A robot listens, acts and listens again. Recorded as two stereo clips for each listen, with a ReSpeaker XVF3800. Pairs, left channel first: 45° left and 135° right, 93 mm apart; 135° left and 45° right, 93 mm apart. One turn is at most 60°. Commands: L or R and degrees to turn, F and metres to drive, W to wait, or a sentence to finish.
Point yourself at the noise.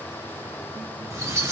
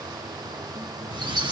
R60
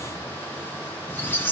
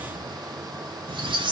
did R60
R20
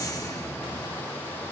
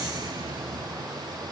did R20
Found it: a squeak, straight ahead, 1 to 2 m away.